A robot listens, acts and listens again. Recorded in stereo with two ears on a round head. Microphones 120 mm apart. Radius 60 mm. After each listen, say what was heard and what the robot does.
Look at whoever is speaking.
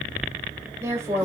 The woman speaking: about 20° right or 160° right. Turn 20° right.
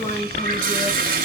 Found it: a woman speaking, straight ahead, 2 to 4 m away.